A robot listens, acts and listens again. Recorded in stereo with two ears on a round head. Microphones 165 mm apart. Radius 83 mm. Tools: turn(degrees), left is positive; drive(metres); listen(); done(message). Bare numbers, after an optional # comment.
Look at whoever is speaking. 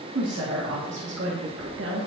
# The woman speaking: about 75° right or 105° right.
turn(-75)
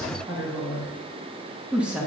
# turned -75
done("Found it: a woman speaking, straight ahead, 1 to 2 m away.")